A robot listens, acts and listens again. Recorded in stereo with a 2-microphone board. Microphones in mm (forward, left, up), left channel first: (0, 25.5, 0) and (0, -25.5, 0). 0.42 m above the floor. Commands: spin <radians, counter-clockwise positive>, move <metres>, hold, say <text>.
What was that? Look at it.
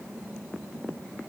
hold
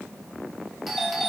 spin 0.52
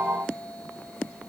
spin 2.62
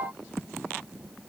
hold
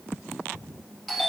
say Found it: a doorbell, straight ahead, 2 to 4 m away.